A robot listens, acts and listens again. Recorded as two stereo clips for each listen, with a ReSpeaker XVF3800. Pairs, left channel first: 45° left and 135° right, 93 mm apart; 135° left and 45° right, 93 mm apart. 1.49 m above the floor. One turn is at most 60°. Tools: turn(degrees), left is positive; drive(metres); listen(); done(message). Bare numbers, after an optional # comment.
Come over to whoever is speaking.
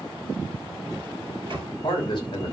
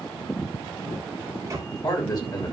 # The man speaking: 85° left.
turn(60)
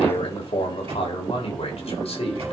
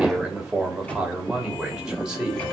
# The man speaking is now 40° left.
turn(40)
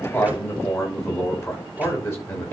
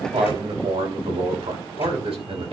# The man speaking is now 20° right.
turn(-20)
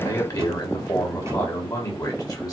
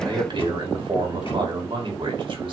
# The man speaking is now 10° right.
turn(-10)
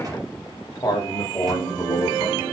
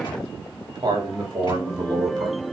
drive(1.0)
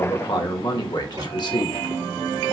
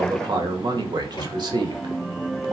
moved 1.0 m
drive(1.0)
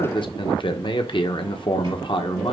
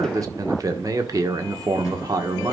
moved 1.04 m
# The man speaking is now 10° left.
turn(10)
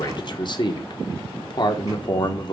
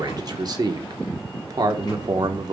drive(1.0)
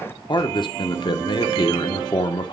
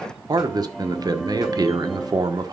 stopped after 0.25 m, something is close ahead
done("I am next to the man speaking.")